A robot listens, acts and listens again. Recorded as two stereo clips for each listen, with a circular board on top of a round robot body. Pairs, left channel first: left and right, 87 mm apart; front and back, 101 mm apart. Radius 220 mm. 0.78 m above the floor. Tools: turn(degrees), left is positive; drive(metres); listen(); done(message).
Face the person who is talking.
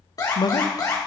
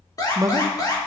turn(degrees=125)
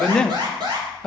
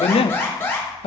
turn(degrees=10)
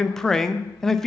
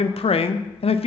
done("Facing the man speaking.")